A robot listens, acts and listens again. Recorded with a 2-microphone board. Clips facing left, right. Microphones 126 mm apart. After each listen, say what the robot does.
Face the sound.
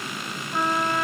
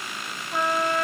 Turn 30° right.
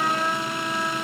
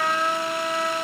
Turn 120° right.
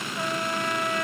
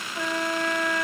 Turn 35° right.
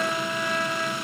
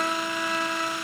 Found it: a trumpet, straight ahead.